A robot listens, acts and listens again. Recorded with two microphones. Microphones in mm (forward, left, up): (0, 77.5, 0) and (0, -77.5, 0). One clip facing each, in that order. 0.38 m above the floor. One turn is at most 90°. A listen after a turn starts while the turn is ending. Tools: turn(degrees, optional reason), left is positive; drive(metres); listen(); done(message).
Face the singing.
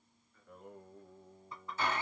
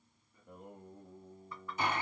turn(degrees=-20, reason="The singing: about 20° right or 160° right.")
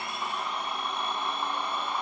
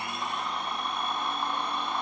listen()
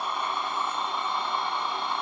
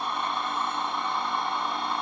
listen()
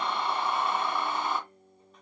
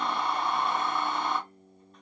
turn(degrees=-90, reason="So it is at 140° right.")
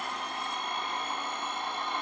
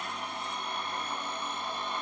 turn(degrees=-50, reason="Nothing new. It was at 50° right.")
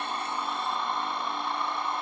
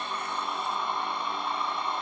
listen()
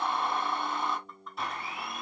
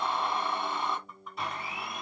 turn(degrees=35, reason="The singing is now 35° left.")
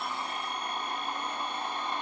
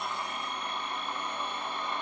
listen()
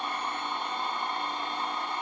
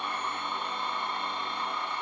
listen()
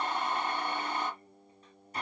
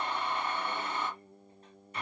done("Found it: singing, straight ahead, 1 to 2 m away.")